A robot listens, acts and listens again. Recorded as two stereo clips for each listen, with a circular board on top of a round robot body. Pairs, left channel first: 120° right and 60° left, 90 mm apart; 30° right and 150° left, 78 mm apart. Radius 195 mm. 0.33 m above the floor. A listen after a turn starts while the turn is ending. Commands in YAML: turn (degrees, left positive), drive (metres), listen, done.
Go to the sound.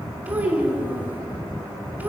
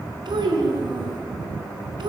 turn: 135
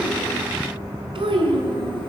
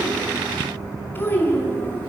turn: 35
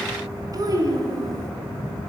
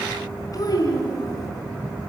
turn: 10
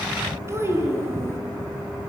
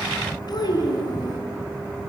drive: 1.0
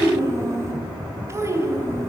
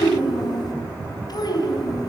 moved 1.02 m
drive: 1.0
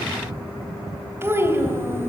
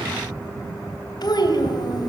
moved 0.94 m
drive: 1.0
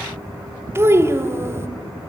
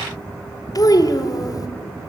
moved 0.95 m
drive: 1.0
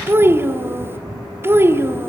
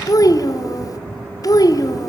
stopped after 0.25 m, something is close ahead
done: "I am next to the child speaking."